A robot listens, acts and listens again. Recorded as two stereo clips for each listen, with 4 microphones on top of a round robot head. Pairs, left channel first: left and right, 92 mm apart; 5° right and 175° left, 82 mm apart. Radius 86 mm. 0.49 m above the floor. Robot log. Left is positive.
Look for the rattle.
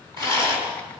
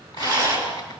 note: The rattle: 125° right.
cmd yaw -125
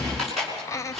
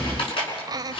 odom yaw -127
end: Facing the rattle, over 4 m away.